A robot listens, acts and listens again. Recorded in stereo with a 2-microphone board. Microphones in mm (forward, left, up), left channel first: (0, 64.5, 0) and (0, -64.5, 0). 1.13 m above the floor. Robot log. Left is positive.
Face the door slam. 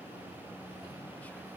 cmd idle
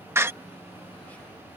note: The door slam: about 20° right or 160° right.
cmd yaw -20
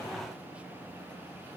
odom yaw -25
cmd idle
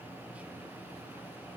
end: I heard a door slam, but can't make it out now. It was about 5° left or 135° right.